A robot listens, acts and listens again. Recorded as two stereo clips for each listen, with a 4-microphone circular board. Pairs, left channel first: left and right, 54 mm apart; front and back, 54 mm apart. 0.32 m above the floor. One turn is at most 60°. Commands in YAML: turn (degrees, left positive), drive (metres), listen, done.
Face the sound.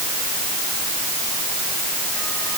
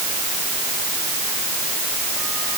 listen: true
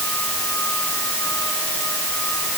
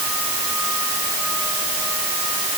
listen: true
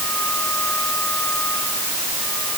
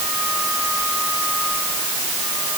done: "I can't make out anything to turn to."